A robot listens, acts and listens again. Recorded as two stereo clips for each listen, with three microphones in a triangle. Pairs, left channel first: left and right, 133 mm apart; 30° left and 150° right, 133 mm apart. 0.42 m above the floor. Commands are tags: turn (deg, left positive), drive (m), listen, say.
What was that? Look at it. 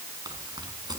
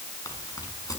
<turn deg="-30"/>
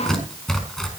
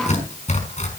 <say>Found it: tearing paper, straight ahead, over 4 m away.</say>